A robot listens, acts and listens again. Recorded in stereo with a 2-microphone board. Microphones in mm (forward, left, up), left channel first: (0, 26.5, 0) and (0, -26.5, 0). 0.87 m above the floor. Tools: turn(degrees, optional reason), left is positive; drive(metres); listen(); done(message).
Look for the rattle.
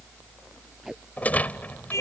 turn(degrees=30, reason="The rattle: about 30° left or 150° left.")
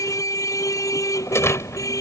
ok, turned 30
turn(degrees=120, reason="So it is at 120° left.")
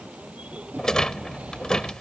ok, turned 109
turn(degrees=15, reason="The rattle is now 15° left.")
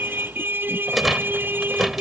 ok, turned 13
done("Found it: a rattle, straight ahead.")